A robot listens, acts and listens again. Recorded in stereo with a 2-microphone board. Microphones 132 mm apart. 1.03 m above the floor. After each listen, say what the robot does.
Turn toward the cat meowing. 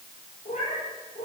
Turn 65° left.
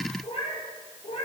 Turn 50° left.
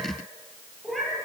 Found it: a cat meowing, straight ahead, over 4 m away.